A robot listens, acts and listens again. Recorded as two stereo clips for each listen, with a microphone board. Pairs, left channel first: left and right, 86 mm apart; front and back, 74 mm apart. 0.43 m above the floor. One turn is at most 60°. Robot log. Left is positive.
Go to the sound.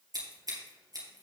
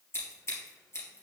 note: The scissors: 50° right.
cmd yaw -50
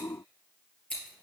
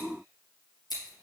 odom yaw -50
note: The scissors is now 15° left.
cmd yaw +15
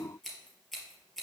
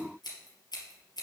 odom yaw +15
cmd fwd 1.0
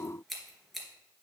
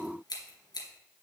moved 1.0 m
cmd fwd 1.0
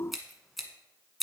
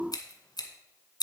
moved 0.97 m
cmd fwd 1.0
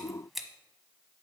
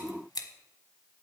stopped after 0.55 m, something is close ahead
end: Arrived at the scissors, straight ahead.